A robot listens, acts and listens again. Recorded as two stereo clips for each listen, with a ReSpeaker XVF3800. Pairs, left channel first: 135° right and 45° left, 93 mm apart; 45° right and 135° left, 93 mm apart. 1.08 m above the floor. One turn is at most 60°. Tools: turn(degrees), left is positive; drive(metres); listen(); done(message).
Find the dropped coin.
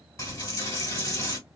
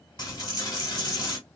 turn(degrees=-60)
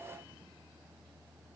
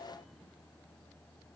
turn(degrees=-25)
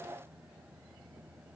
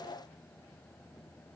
done("I heard a dropped coin from this way, but can't make it out now.")